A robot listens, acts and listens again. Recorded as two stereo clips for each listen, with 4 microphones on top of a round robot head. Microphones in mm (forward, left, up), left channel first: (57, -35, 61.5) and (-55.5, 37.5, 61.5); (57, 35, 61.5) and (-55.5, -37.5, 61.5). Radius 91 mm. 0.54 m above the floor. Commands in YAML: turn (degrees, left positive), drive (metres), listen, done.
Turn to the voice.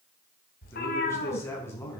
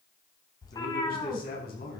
turn: 40
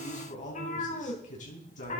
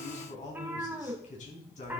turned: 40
done: "Found it: a man speaking, straight ahead, over 4 m away."